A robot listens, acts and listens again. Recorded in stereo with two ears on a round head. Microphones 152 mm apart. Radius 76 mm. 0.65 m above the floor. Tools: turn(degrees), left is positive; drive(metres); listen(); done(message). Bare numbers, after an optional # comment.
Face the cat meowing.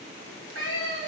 # The cat meowing: about 75° right or 105° right.
turn(-75)
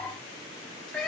done("Facing the cat meowing.")